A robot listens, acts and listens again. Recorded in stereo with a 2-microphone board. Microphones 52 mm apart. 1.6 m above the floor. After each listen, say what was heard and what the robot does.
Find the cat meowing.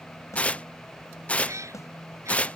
Turn 90° right.
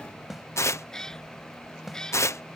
So it is at 10° left. Turn 10° left.
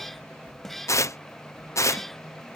Facing the cat meowing.